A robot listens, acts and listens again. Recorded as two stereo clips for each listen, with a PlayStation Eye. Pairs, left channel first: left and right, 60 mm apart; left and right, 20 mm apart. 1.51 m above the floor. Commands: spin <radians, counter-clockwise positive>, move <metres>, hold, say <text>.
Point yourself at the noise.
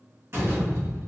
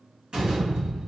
spin -0.87
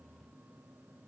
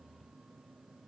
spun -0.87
hold
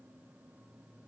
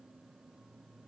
say I heard a door slam, but can't make it out now. It was about straight ahead or 80° right.